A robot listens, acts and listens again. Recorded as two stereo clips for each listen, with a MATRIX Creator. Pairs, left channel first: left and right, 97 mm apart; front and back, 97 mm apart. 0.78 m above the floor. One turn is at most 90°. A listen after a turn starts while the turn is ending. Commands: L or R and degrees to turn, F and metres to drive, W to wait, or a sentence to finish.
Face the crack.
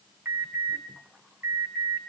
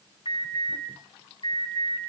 W
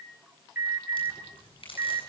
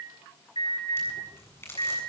L65
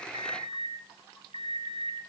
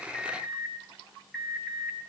I heard a crack from this way, but can't make it out now.